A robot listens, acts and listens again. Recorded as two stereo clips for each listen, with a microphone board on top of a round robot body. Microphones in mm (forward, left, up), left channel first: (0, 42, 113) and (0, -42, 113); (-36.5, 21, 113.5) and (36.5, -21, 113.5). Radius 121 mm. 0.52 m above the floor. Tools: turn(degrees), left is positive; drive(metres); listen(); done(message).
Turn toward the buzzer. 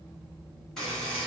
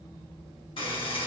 turn(degrees=170)
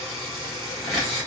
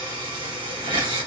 done("Facing the buzzer.")